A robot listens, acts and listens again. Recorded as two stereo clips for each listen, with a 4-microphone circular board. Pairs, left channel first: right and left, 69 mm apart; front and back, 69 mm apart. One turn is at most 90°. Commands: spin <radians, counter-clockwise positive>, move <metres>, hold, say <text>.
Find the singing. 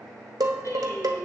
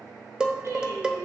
spin -1.57
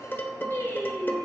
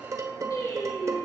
spin -0.52
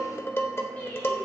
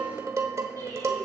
spin -0.44
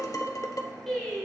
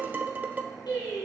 say Facing the singing, over 4 m away.